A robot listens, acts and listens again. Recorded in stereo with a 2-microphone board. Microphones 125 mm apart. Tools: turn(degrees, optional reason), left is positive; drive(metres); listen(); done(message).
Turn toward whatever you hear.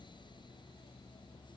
listen()
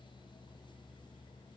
listen()
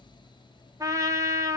turn(degrees=-25, reason="The trumpet: about 25° right or 155° right.")
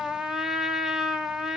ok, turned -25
done("Found it: a trumpet, straight ahead.")